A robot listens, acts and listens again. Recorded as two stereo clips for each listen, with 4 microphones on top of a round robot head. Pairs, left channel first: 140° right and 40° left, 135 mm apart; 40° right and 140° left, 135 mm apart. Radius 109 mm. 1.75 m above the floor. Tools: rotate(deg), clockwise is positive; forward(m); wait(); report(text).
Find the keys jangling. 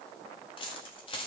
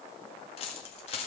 rotate(85)
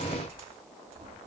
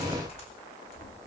report("Facing the keys jangling, 1 to 2 m away.")